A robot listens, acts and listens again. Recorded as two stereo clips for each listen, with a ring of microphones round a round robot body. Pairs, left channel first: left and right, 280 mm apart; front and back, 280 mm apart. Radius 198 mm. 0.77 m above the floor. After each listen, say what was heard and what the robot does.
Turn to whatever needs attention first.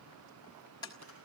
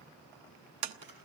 Keep listening.
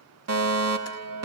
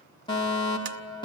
The fire alarm: 75° right. Turn 75° right.
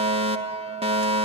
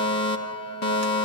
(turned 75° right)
The fire alarm is now 25° right. Turn 25° right.
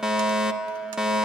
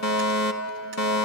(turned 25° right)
Facing the fire alarm.